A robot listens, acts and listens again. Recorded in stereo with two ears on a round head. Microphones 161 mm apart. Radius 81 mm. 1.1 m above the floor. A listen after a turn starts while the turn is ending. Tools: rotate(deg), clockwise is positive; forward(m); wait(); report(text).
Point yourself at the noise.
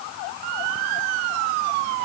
wait()
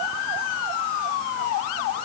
wait()
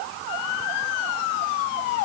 report("I can't make out anything.")